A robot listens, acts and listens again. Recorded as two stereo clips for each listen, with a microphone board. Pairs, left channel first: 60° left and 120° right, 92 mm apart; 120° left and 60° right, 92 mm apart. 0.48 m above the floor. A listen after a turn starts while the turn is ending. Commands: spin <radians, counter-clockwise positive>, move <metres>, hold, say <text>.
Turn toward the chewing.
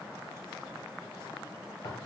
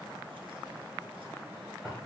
hold
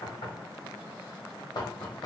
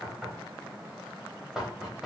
hold
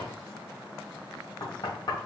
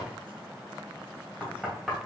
say I can't make out chewing to turn to.